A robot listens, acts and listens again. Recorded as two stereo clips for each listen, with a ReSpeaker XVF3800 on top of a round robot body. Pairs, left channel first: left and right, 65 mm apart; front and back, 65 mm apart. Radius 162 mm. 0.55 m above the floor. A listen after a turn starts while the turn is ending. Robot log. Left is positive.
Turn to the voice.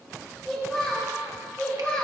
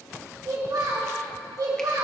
note: The child speaking: 165° left.
cmd yaw +165
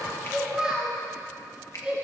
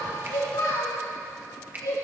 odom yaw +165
note: The child speaking is now 15° right.
cmd yaw -15
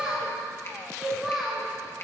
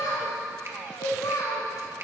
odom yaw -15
end: Facing the child speaking, over 4 m away.